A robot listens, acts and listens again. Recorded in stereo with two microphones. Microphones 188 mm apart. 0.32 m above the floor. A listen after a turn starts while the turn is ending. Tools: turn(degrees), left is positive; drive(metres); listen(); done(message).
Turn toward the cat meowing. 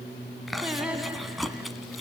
listen()
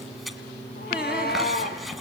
turn(degrees=55)
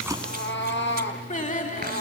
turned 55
turn(degrees=80)
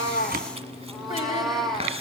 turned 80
done("Facing the cat meowing.")